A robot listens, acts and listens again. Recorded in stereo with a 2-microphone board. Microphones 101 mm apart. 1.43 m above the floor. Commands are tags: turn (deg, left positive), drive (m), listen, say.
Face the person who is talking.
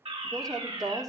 <turn deg="-40"/>
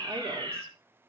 <listen/>
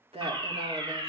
<turn deg="-100"/>
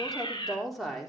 <say>Found it: a woman speaking, straight ahead, 2 to 4 m away.</say>